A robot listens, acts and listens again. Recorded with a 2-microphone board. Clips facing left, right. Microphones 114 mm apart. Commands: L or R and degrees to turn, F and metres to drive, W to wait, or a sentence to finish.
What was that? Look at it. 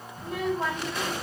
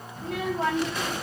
R90
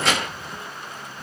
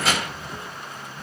Found it: a child speaking, straight ahead, 1 to 2 m away.